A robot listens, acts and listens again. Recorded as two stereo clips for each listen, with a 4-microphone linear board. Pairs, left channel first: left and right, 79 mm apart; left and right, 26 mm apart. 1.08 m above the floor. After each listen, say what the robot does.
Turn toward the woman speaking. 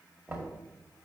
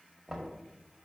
Keep listening.
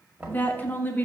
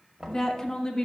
Turn 20° left.
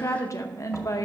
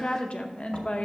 Turn 135° left.
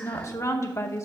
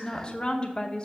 Turn 40° left.
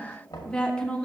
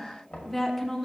Turn 15° left.
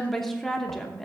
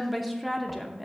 Facing the woman speaking, under 1 m away.